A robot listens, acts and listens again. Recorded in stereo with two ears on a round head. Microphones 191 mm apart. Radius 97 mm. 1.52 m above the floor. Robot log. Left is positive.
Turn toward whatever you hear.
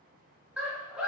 cmd yaw -30
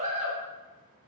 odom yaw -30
note: So it is at 145° right.
cmd yaw -145
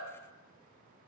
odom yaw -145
cmd idle
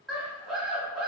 end: Facing the scream, under 1 m away.